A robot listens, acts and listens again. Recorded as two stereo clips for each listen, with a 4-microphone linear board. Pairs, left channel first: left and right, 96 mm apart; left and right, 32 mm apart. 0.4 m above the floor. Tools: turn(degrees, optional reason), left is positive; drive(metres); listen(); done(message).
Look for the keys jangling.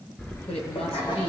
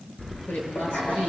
turn(degrees=25, reason="The keys jangling: about 25° left or 155° left.")
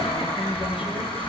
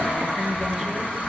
turn(degrees=120, reason="So it is at 120° left.")
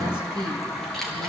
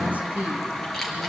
done("Facing the keys jangling.")